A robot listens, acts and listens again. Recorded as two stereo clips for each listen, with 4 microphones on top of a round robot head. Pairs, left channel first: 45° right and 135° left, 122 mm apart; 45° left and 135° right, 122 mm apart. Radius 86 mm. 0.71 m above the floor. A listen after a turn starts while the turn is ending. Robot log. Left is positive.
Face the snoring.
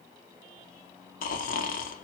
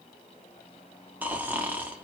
note: The snoring: 55° right.
cmd yaw -55
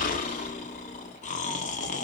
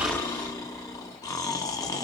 note: The snoring is now 20° right.
cmd yaw -20
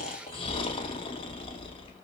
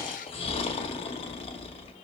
end: Facing the snoring, under 1 m away.